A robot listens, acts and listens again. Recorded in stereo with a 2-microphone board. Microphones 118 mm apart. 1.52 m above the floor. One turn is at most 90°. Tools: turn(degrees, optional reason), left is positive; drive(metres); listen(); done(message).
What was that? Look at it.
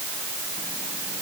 listen()
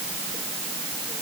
listen()
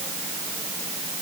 done("I can't make out anything to turn to.")